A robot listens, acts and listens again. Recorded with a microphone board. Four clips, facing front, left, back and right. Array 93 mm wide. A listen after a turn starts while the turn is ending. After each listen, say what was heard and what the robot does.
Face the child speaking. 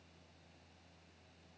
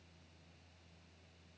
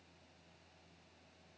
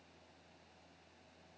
Keep listening.
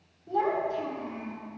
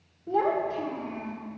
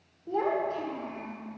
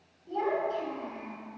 The child speaking: 130° left. Turn 130° left.
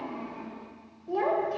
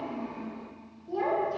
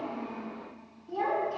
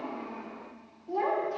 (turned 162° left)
Facing the child speaking.